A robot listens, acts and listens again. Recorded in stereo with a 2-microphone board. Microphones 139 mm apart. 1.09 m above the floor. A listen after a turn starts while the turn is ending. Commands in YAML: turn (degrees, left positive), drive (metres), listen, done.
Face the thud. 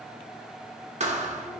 turn: -55
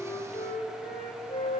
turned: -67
listen: true
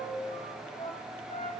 done: "I heard a thud, but can't make it out now. It was about 15° left or 60° right."